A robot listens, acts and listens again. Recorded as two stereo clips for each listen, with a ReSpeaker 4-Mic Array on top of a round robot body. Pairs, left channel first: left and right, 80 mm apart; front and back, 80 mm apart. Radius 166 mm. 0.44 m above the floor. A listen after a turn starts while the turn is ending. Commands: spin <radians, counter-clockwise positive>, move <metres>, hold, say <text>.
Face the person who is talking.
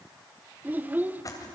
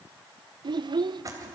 spin -2.79
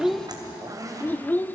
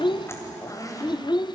spin 0.35
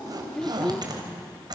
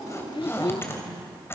say Found it: a child speaking, straight ahead, under 1 m away.